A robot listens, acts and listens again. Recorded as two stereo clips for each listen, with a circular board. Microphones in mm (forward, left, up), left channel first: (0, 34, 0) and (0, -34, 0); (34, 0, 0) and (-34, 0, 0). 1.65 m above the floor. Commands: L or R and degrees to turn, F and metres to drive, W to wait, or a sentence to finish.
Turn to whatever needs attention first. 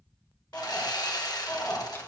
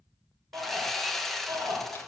L150
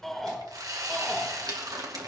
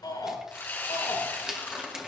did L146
Facing the shout, over 4 m away.